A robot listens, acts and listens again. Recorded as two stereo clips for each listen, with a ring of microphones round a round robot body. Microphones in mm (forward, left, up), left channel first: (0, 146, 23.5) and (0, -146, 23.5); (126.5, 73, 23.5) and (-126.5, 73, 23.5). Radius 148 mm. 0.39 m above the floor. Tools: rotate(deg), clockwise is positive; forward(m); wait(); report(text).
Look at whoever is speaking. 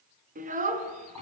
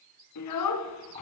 rotate(25)
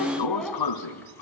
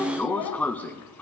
report("Found it: a child speaking, straight ahead.")